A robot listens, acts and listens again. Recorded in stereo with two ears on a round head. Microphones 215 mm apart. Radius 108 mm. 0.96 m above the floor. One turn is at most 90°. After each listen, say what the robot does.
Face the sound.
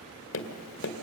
Turn 55° left.
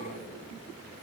Keep listening.
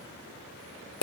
Turn 65° left.
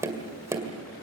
Turn 10° right.
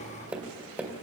Facing the tapping.